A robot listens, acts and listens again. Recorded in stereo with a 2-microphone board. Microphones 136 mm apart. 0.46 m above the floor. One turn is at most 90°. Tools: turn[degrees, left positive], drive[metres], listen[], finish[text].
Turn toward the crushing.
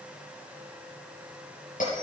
Action: listen[]
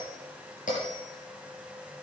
Action: listen[]
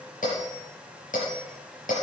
Action: finish[I can't make out crushing to turn to.]